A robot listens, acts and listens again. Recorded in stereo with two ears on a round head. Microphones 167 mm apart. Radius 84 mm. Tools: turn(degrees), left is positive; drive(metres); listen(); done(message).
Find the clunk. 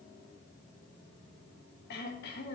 listen()
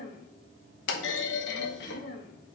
turn(degrees=65)
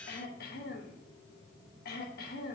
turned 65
listen()
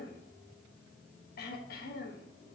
done("I heard a clunk, but can't make it out now. It was about straight ahead or 50° left.")